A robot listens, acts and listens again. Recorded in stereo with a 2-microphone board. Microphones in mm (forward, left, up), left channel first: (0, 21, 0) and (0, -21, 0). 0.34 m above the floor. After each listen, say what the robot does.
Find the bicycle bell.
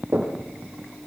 Keep listening.
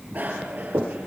Turn 40° right.
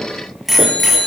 Found it: a bicycle bell, straight ahead.